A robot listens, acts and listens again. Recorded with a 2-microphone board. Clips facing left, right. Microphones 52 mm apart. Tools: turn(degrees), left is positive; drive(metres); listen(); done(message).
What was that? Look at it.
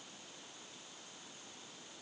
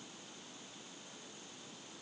listen()
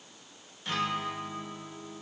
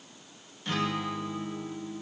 turn(degrees=30)
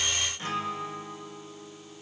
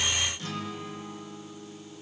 turn(degrees=145)
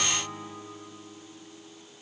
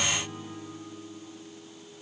turn(degrees=65)
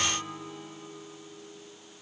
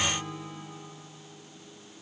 turn(degrees=15)
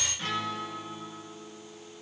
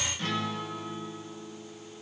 done("Facing the guitar, 1 to 2 m away.")